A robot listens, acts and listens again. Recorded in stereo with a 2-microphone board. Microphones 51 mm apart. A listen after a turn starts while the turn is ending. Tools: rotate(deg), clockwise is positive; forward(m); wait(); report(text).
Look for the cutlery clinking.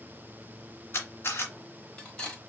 rotate(-20)
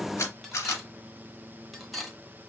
report("Facing the cutlery clinking.")